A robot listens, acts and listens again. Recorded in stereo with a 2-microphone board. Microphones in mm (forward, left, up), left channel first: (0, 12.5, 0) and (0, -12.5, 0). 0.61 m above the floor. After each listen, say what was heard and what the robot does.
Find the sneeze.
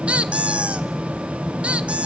Keep listening.
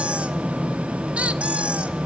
Keep listening.
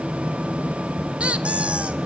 I can't make out a sneeze to turn to.